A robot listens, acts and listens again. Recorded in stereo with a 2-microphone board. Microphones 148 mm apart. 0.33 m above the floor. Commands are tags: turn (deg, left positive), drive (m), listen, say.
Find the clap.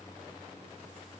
<listen/>
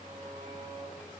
<listen/>
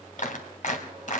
<turn deg="60"/>
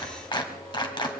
<turn deg="35"/>
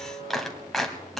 <say>Facing the clap, 1 to 2 m away.</say>